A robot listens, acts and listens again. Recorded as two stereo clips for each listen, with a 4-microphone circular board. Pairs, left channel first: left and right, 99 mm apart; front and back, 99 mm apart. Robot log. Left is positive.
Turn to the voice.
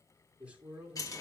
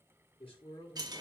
note: The man speaking: 10° right.
cmd yaw -10
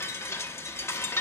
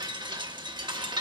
cmd idle
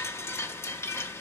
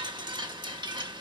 cmd idle
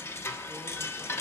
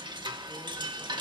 end: I heard a man speaking from this way, but can't make it out now.